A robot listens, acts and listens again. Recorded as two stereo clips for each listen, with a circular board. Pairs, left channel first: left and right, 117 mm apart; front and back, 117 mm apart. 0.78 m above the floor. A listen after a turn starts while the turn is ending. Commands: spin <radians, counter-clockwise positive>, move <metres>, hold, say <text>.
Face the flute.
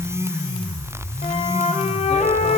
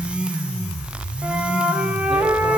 spin 1.83
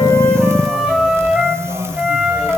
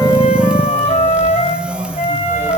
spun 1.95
spin -0.17
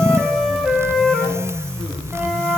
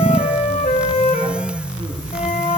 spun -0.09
say Found it: a flute, straight ahead, 2 to 4 m away.